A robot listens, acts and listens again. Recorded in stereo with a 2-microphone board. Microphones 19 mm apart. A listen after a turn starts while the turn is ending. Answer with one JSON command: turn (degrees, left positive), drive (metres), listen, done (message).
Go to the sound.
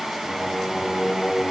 {"turn": 50}
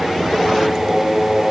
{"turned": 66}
{"turn": -10}
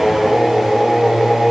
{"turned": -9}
{"drive": 1.0}
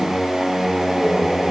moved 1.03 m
{"drive": 1.0}
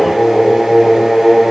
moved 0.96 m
{"drive": 1.0}
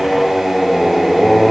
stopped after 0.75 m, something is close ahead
{"done": "I am next to the singing."}